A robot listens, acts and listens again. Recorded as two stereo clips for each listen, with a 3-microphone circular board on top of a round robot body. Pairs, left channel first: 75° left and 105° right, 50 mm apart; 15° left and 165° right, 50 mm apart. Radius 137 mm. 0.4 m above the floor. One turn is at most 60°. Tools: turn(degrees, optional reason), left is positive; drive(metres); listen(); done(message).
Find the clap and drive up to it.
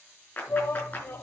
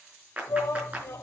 turn(degrees=60, reason="The clap: 130° left.")
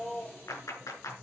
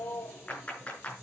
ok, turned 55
turn(degrees=60, reason="The clap is now 75° left.")
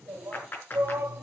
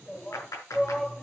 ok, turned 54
turn(degrees=25, reason="The clap is now 25° left.")
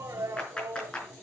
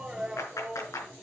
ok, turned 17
drive(metres=1.0)
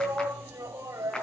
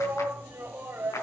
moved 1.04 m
drive(metres=1.0)
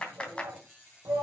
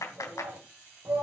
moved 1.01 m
turn(degrees=10, reason="The clap is now 10° left.")
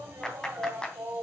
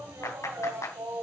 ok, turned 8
drive(metres=1.0)
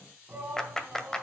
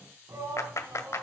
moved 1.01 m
drive(metres=1.0)
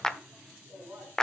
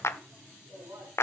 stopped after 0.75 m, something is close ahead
done("Arrived at the clap, straight ahead.")